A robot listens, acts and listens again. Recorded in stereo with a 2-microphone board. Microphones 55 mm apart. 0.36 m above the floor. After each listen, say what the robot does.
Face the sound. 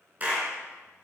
Turn 30° right.
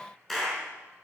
Found it: a clap, straight ahead.